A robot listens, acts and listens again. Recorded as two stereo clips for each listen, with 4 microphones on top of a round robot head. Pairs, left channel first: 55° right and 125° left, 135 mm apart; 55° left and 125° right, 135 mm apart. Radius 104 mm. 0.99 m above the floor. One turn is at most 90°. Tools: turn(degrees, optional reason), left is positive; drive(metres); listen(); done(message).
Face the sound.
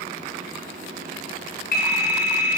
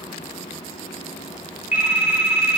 turn(degrees=-45, reason="The phone ringing: 45° right.")
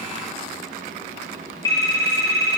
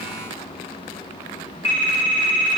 turn(degrees=10, reason="The phone ringing is now 10° left.")
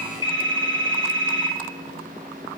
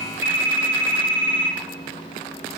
done("Facing the phone ringing.")